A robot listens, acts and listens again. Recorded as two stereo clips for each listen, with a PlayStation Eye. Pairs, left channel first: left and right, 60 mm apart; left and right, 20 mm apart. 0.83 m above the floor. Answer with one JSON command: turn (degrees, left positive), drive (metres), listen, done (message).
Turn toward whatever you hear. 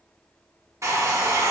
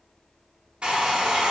{"turn": -60}
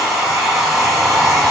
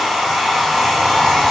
{"done": "Facing the hair dryer, under 1 m away."}